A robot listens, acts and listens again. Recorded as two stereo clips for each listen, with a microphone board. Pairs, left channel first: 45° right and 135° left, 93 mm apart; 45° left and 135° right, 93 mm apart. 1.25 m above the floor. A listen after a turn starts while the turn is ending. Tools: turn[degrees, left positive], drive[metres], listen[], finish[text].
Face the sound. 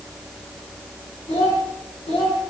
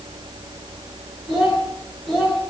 Thought: The child speaking: 50° right.
Action: turn[-50]
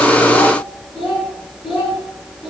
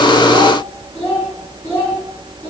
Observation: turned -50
Thought: The child speaking is now 20° right.
Action: turn[-20]
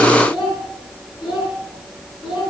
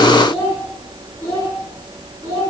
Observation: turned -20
Thought: The child speaking is now 10° right.
Action: turn[-10]
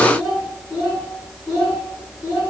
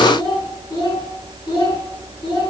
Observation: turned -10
Action: finish[Facing the child speaking, over 4 m away.]